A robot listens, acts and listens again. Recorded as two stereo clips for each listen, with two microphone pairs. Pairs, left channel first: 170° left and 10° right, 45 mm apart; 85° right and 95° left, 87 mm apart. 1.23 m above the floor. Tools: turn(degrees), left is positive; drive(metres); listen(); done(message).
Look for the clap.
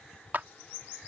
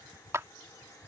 turn(degrees=35)
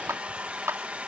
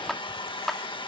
done("Found it: a clap, straight ahead.")